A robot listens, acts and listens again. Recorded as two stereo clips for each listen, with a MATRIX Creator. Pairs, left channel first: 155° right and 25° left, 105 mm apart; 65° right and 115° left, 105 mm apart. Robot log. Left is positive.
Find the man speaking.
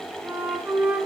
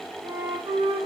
cmd idle
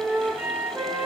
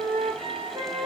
cmd idle
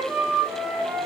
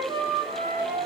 end: I can't make out a man speaking, only a flute.